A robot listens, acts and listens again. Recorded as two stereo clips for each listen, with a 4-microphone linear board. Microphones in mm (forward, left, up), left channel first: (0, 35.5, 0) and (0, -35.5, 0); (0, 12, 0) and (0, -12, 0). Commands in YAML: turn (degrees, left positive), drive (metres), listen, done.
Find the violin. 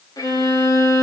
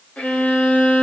turn: 70
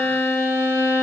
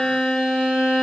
turn: 45
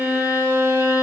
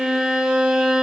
turn: -25
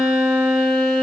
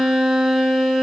turn: -10
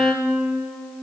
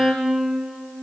done: "Found it: a violin, straight ahead."